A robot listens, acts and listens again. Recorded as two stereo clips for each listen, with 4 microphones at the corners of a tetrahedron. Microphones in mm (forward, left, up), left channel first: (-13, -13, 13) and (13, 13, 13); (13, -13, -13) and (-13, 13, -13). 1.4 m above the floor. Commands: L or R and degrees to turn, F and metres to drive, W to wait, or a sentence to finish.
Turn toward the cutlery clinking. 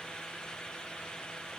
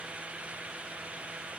W
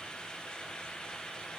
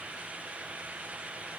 W
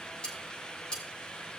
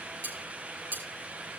L165
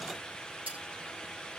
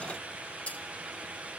Facing the cutlery clinking, over 4 m away.